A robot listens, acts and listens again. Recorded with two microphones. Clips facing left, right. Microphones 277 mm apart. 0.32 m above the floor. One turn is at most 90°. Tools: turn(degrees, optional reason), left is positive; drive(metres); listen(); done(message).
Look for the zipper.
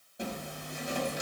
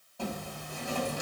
turn(degrees=20, reason="The zipper: about 20° left or 160° left.")
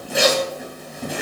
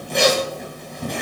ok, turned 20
done("Found it: a zipper, straight ahead.")